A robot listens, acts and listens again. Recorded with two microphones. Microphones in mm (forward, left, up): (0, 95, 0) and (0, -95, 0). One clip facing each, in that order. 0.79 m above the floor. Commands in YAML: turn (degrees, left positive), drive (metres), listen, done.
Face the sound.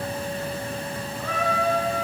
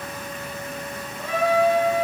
turn: -15
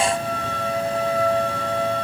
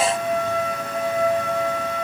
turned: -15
done: "Facing the trumpet."